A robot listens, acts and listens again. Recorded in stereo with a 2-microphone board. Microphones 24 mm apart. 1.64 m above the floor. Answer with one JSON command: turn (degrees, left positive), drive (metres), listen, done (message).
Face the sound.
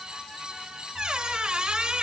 {"turn": -50}
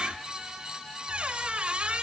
{"turn": -75}
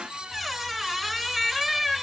{"done": "Found it: a squeak, straight ahead."}